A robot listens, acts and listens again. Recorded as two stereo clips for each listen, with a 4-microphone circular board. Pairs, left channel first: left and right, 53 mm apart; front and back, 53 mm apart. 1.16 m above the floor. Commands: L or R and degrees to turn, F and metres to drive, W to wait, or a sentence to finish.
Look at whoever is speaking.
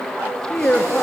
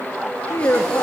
L25
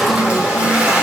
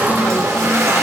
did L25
W
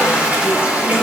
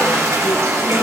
W
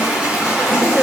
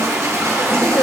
L10
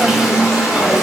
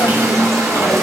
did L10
W
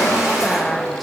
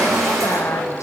W
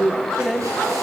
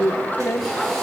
Found it: a woman speaking, straight ahead.